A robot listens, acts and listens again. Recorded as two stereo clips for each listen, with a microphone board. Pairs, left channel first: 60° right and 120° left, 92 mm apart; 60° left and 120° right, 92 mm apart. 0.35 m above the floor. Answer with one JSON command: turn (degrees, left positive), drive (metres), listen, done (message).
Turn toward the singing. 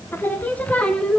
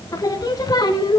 {"turn": 20}
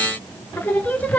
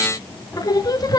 {"turn": 15}
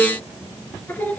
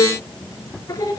{"turn": 10}
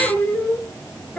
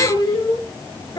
{"turn": 15}
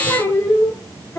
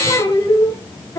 {"done": "Found it: singing, straight ahead."}